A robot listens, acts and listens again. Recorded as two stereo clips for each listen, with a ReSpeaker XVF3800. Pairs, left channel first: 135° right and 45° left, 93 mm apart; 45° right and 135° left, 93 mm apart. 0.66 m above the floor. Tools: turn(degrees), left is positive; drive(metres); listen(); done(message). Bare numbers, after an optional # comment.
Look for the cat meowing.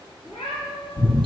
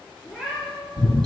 # The cat meowing: 130° right.
turn(-130)
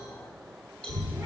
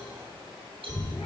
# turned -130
listen()
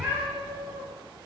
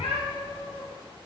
# The cat meowing is now 25° right.
turn(-25)
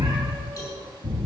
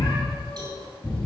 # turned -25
listen()
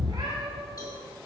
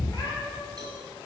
# The cat meowing is now 10° left.
turn(10)
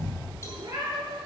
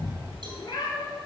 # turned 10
done("Found it: a cat meowing, straight ahead.")